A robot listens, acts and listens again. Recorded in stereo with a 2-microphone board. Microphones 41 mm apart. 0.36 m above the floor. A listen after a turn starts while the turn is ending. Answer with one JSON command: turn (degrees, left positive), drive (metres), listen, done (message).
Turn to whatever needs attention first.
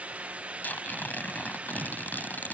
{"listen": true}
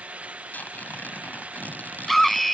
{"turn": 30}
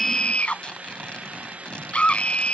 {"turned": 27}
{"turn": 150}
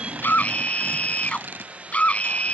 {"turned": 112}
{"turn": 35}
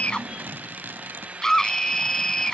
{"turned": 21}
{"turn": 15}
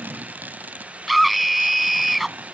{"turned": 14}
{"done": "Found it: a scream, straight ahead."}